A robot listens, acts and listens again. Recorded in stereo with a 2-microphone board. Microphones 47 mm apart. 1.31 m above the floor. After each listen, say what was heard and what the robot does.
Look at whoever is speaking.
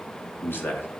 The man speaking: about 55° left or 125° left. Turn 55° left.
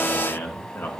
So it is at 70° left. Turn 70° left.
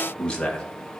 The man speaking is now 20° left. Turn 20° left.
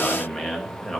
Found it: a man speaking, straight ahead.